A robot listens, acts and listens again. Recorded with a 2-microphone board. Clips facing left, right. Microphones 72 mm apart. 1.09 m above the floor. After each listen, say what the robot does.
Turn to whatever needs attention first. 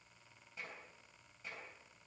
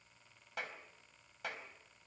Keep listening.
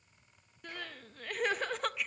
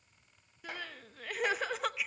Turn 30° right.
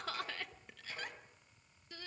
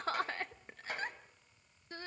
Turn 145° right.
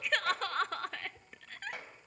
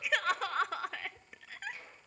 Found it: crying, straight ahead, under 1 m away.